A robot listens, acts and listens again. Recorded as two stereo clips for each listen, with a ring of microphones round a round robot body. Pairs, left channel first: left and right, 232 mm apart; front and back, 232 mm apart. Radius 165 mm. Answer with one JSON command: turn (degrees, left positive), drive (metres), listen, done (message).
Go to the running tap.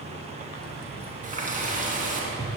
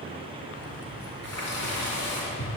{"turn": -35}
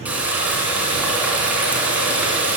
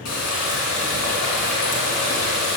{"drive": 1.0}
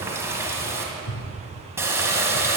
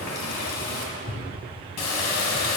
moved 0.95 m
{"turn": -10}
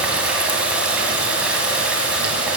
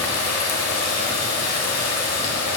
{"drive": 1.0}
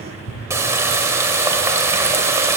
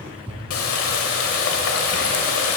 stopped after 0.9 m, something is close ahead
{"turn": -10}
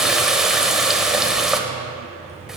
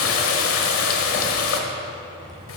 {"done": "Arrived at the running tap, straight ahead."}